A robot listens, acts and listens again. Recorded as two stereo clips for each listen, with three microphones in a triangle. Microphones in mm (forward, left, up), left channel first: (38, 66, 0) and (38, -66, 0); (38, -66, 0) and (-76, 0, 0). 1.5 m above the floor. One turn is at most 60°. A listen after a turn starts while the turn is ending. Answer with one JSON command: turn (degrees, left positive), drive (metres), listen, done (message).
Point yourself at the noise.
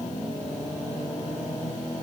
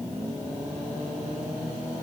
{"listen": true}
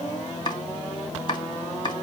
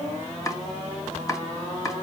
{"turn": 35}
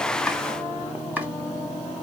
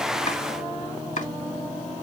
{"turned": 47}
{"turn": -10}
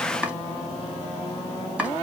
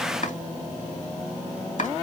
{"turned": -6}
{"turn": -10}
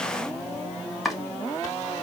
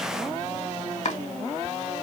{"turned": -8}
{"done": "Found it: chopping, straight ahead."}